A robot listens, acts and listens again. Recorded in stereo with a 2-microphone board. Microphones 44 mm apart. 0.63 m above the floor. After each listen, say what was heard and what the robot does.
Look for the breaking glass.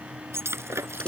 The breaking glass: about 75° right or 105° right. Turn 75° right.
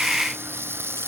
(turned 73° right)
Keep listening.
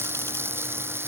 I heard breaking glass, but can't make it out now. It was about straight ahead or 30° right.